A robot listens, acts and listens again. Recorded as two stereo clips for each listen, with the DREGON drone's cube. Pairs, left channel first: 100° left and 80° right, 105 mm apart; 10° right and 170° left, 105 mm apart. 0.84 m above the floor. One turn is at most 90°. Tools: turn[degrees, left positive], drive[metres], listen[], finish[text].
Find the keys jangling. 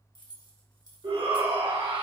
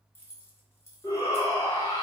Thought: The keys jangling: 55° left.
Action: turn[55]
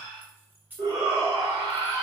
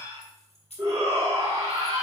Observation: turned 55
Action: finish[Found it: keys jangling, straight ahead.]